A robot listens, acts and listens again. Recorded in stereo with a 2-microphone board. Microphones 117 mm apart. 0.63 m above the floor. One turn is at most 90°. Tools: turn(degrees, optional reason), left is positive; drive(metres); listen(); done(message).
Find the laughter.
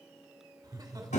turn(degrees=-35, reason="The laughter: about 35° right or 145° right.")
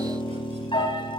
listen()
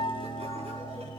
listen()
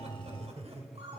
turn(degrees=-90, reason="So it is at 110° right.")
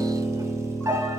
turn(degrees=-20, reason="Nothing new. It was at 20° right.")
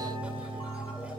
listen()
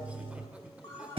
turn(degrees=-10, reason="The laughter is now 10° right.")
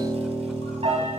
listen()
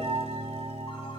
listen()
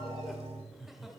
done("Found it: laughter, straight ahead.")